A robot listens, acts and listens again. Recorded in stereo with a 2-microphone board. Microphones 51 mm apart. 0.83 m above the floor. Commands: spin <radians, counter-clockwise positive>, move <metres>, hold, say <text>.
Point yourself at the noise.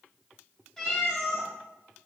spin 0.52
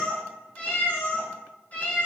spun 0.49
spin 2.53
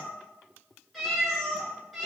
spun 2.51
say Found it: a cat meowing, straight ahead.